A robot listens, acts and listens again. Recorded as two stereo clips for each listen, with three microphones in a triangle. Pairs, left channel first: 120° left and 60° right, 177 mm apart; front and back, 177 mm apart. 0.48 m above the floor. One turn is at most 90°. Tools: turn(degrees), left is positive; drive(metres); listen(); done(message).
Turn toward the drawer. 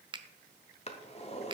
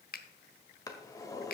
turn(degrees=70)
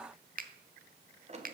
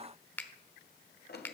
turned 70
turn(degrees=-10)
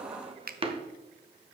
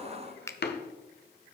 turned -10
done("Facing the drawer.")